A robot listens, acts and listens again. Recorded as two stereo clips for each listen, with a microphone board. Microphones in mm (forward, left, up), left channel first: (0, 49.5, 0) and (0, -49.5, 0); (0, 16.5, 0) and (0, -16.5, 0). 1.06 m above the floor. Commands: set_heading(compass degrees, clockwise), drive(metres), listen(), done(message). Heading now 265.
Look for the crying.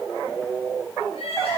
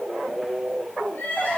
set_heading(175)
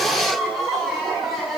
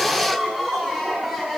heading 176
done("Facing the crying, over 4 m away.")